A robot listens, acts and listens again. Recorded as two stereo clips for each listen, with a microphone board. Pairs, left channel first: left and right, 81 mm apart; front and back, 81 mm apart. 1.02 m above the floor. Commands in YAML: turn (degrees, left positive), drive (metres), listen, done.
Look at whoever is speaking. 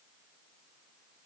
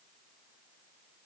listen: true
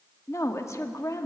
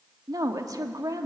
turn: 140
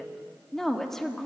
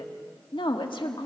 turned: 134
done: "Facing the woman speaking, 1 to 2 m away."